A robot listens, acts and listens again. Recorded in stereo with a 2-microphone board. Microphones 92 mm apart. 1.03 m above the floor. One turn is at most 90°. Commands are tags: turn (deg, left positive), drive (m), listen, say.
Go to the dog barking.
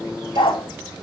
<turn deg="65"/>
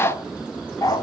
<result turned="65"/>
<turn deg="45"/>
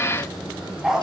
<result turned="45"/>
<drive m="1.0"/>
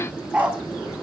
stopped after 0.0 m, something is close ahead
<turn deg="-10"/>
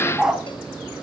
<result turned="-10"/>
<say>Something is in my way. I am facing the dog barking but have not reached it.</say>